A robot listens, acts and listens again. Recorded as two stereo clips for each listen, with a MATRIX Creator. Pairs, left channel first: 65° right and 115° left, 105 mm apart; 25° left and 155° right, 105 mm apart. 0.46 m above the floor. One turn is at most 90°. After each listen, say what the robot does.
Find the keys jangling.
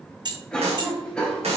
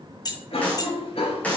Turn 75° left.
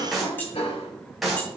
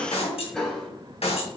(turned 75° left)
Keep listening.
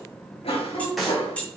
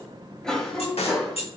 Turn 10° left.
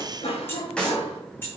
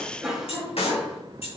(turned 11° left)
Found it: keys jangling, straight ahead, 2 to 4 m away.